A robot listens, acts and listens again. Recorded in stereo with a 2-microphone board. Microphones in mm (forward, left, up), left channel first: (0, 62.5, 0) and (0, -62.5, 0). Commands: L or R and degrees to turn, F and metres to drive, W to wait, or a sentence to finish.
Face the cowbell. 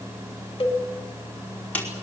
L45
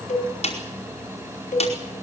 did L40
L95
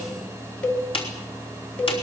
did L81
L15
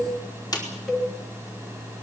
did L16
Facing the cowbell.